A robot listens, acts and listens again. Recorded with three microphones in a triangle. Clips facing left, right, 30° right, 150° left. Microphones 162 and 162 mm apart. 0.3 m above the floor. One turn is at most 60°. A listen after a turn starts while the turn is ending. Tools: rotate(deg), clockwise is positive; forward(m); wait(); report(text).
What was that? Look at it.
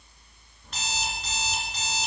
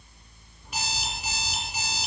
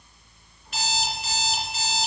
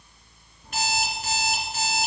rotate(60)
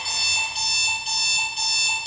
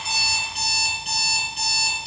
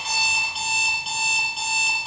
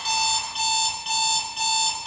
rotate(60)
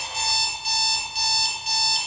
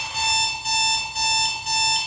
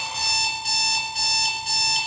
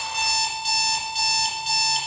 rotate(60)
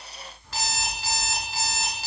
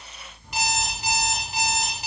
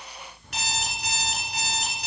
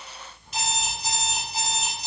rotate(20)
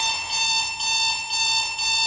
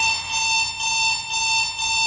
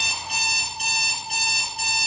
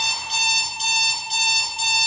report("Facing the alarm clock, 2 to 4 m away.")